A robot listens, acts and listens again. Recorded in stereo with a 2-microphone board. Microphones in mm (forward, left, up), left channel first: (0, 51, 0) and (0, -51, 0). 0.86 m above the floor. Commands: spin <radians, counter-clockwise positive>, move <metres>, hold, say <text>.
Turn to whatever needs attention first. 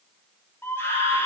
spin 0.35
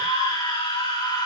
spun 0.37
spin 2.36
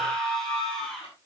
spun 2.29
say Found it: a scream, straight ahead.